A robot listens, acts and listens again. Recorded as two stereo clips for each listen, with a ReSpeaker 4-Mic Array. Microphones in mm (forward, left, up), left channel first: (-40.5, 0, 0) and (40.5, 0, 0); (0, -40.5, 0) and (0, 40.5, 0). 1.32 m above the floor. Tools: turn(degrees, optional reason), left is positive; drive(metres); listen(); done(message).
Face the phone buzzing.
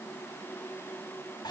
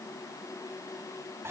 listen()
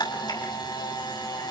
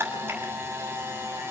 listen()
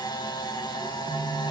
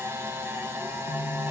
turn(degrees=-30, reason="The phone buzzing: 30° right.")
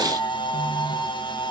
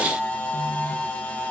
turn(degrees=15, reason="The phone buzzing is now 15° left.")
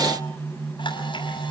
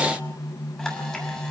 turn(degrees=10, reason="The phone buzzing is now 10° left.")
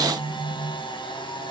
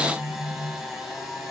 done("Facing the phone buzzing, 1 to 2 m away.")